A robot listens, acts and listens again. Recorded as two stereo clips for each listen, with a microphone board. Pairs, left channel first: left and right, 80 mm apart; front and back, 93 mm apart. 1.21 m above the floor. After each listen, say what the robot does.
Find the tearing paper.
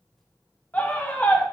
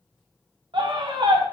Keep listening.
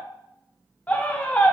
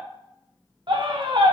Keep listening.
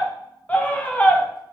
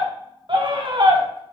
I can't make out tearing paper to turn to.